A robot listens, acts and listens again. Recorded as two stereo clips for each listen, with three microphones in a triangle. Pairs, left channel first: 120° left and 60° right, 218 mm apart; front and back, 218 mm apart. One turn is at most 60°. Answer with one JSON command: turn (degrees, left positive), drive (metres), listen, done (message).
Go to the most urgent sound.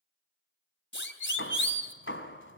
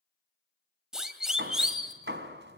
{"turn": 60}
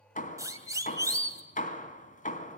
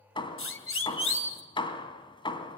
{"turn": 15}
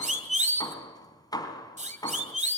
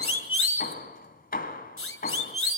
{"drive": 1.0}
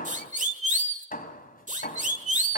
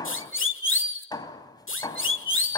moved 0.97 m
{"turn": -10}
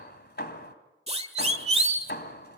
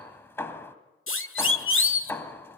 {"drive": 1.0}
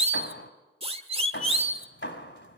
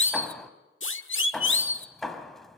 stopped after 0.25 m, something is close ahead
{"done": "Arrived at the siren, straight ahead."}